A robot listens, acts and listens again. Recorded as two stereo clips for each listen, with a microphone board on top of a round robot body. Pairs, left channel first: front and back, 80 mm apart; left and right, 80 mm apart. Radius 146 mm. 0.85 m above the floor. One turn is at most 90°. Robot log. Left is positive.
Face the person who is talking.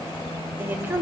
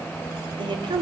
note: The woman speaking: 115° right.
cmd yaw -90
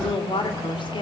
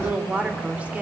note: The woman speaking is now 15° right.
cmd yaw -15
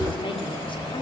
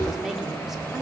cmd idle
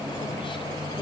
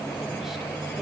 cmd idle
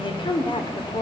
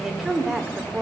end: Facing the woman speaking, 2 to 4 m away.